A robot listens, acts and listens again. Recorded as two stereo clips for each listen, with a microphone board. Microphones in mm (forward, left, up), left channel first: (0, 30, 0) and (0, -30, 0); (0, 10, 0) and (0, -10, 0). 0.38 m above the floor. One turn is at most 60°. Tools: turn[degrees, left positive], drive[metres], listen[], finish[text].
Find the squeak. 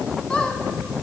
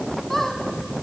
Action: turn[30]
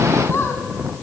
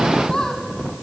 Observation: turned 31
Thought: So it is at 135° left.
Action: turn[60]
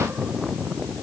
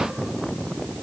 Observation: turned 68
Thought: Nothing new. It was at 65° left.
Action: turn[60]
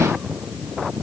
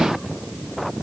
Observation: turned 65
Action: listen[]
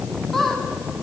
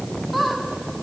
Action: finish[Facing the squeak.]